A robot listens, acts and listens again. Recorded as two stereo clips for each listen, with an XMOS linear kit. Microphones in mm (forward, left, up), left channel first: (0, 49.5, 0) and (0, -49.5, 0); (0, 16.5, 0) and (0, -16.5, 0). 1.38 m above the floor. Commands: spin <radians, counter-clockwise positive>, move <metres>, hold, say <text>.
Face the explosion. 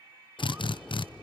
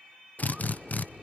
spin 0.52
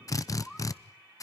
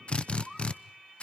hold
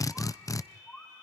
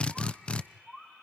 say I heard an explosion, but can't make it out now. It was about 25° right or 145° left.